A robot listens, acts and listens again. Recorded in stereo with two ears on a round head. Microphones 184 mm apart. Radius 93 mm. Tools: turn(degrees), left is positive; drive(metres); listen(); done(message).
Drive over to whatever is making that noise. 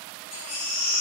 turn(degrees=65)
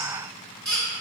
drive(metres=1.0)
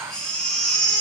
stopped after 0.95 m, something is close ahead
done("I am next to the baby crying.")